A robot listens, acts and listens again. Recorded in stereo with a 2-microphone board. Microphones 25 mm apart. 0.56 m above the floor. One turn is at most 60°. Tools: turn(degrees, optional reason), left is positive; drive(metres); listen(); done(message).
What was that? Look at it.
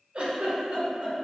turn(degrees=-50, reason="The giggle: about 50° right or 130° right.")
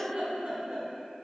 turn(degrees=-60, reason="So it is at 80° right.")
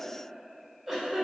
turn(degrees=-20, reason="The giggle is now 20° right.")
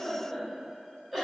turn(degrees=-10, reason="The giggle is now 10° right.")
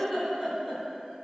done("Facing the giggle, 1 to 2 m away.")